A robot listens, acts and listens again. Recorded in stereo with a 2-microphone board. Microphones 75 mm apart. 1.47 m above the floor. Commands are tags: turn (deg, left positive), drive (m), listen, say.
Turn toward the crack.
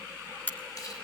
<turn deg="25"/>
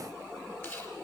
<listen/>
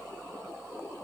<say>I heard a crack, but can't make it out now. It was about straight ahead or 130° left.</say>